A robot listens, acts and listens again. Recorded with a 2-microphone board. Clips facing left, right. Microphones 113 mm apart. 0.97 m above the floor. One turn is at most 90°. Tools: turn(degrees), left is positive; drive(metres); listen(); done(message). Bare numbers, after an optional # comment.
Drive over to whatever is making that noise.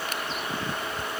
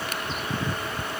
listen()
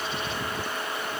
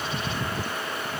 listen()
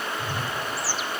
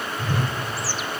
# The whoosh: about 70° right or 110° right.
turn(-70)
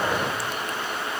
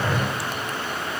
drive(1.0)
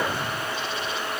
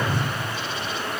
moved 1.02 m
drive(1.0)
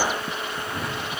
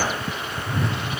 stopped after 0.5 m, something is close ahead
done("Arrived at the whoosh, straight ahead.")